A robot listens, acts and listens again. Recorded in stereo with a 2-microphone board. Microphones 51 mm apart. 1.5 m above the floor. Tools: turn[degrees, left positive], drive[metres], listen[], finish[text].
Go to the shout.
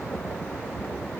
Action: listen[]
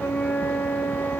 Action: listen[]
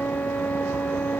Action: finish[I can't make out a shout, only a flute.]